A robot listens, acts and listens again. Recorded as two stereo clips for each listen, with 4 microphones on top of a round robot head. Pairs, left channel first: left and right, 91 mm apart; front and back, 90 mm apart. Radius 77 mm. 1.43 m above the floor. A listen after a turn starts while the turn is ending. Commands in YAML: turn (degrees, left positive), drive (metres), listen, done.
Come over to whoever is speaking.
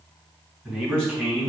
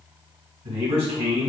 turn: 175
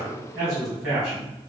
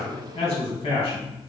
turn: -30
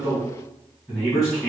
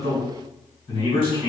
drive: 1.0
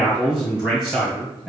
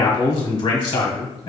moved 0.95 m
drive: 1.0
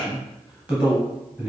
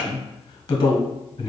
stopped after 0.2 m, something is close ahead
turn: -10
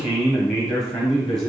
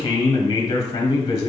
done: "Arrived at the man speaking, straight ahead."